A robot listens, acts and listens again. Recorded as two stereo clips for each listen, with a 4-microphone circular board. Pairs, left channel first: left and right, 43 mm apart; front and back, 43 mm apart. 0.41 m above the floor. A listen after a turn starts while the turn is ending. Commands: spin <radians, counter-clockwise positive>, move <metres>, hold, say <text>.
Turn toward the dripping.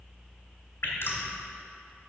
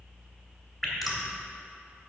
spin 1.48
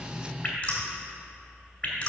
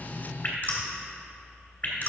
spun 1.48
spin 0.61
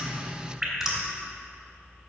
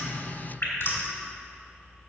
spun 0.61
spin -0.26
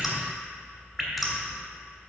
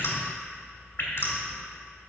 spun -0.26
spin -0.17
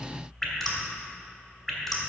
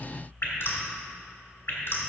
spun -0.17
say Found it: dripping, straight ahead.